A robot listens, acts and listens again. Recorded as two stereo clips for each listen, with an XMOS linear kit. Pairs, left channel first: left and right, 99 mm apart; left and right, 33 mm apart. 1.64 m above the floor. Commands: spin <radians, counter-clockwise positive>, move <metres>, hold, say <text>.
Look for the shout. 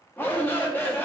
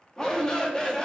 spin 0.35
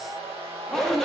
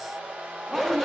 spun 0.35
say Facing the shout, 1 to 2 m away.